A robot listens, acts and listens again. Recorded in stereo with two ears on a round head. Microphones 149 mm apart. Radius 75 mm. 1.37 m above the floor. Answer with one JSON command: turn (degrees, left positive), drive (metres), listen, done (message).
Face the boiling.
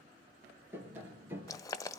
{"turn": 20}
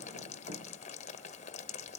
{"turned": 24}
{"turn": 135}
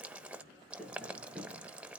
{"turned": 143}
{"done": "Found it: boiling, straight ahead."}